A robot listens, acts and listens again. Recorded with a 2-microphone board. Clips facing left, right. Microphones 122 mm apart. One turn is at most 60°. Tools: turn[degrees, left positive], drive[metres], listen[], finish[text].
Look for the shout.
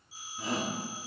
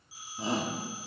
Thought: The shout: about 25° right or 155° right.
Action: turn[-25]
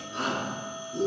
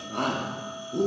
Thought: So it is at 125° right.
Action: turn[-60]
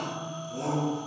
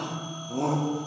Thought: The shout is now 70° right.
Action: turn[-60]
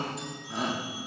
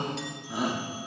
Action: finish[Facing the shout.]